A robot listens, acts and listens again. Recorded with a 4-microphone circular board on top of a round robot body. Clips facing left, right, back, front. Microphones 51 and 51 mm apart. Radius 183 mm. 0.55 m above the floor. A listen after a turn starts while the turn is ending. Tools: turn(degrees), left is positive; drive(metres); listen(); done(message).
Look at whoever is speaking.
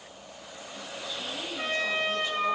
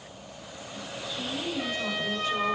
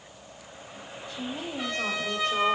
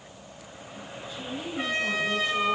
turn(degrees=180)
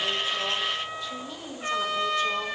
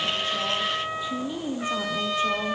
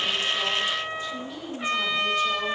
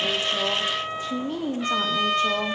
turn(degrees=-35)
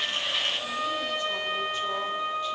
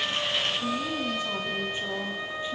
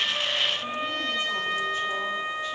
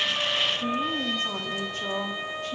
listen()
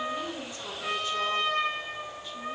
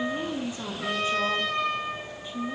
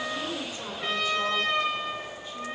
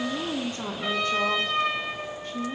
turn(degrees=-25)
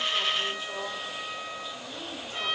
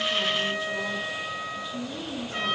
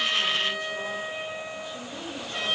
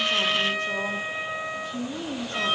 done("Found it: a woman speaking, straight ahead, 2 to 4 m away.")